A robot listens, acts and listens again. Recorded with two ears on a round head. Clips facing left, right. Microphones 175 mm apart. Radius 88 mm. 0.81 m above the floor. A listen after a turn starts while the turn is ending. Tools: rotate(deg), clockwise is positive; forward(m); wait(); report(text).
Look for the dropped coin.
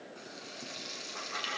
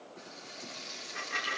rotate(20)
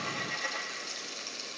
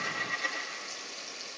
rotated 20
report("Found it: a dropped coin, straight ahead.")